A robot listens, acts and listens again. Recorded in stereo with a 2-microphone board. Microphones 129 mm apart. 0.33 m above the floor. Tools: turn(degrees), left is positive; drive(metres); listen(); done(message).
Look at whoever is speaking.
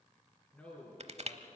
turn(degrees=30)
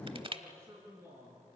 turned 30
turn(degrees=-25)
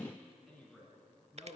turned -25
done("Facing the man speaking.")